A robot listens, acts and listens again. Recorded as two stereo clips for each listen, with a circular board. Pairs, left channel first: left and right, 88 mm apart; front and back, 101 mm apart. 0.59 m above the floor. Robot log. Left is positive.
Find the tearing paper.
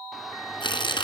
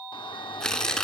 note: The tearing paper: 85° left.
cmd yaw +85
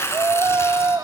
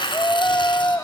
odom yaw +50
note: The tearing paper is now 35° left.
cmd yaw +35
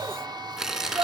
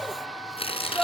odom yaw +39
end: Found it: tearing paper, straight ahead, 2 to 4 m away.